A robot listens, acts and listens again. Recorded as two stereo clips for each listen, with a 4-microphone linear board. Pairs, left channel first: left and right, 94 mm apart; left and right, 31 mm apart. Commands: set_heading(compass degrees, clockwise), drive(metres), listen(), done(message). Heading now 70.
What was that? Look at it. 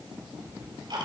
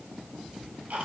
set_heading(125)
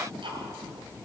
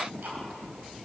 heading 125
set_heading(195)
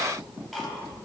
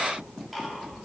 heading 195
done("Facing the ticking, 2 to 4 m away.")